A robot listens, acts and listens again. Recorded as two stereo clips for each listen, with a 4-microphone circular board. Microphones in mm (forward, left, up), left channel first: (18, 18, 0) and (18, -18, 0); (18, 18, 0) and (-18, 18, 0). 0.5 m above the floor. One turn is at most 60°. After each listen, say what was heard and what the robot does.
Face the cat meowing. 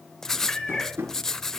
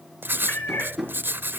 The cat meowing: 15° left. Turn 15° left.
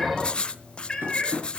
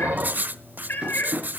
The cat meowing is now 20° left. Turn 20° left.
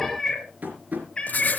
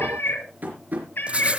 The cat meowing is now 25° left. Turn 25° left.
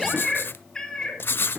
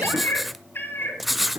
The cat meowing is now 20° left. Turn 20° left.
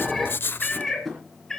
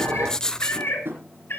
Facing the cat meowing, 2 to 4 m away.